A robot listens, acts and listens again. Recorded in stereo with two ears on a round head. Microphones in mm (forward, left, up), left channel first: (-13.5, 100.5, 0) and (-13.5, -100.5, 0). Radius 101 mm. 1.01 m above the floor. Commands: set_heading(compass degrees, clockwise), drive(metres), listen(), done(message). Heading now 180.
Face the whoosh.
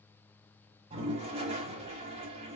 listen()
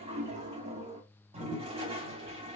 listen()
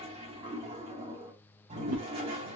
set_heading(250)
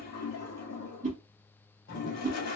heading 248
set_heading(283)
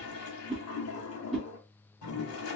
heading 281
done("Facing the whoosh.")